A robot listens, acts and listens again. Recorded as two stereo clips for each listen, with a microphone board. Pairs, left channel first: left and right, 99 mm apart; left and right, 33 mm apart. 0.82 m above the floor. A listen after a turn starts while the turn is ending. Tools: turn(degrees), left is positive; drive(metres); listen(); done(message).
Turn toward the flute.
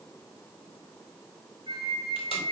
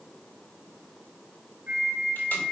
turn(degrees=-50)
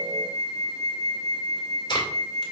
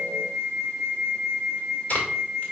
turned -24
turn(degrees=-105)
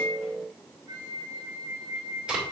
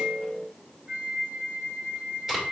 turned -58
turn(degrees=-45)
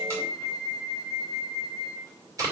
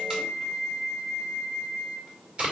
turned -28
turn(degrees=-20)
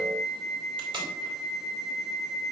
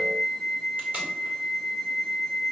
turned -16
done("Found it: a flute, straight ahead.")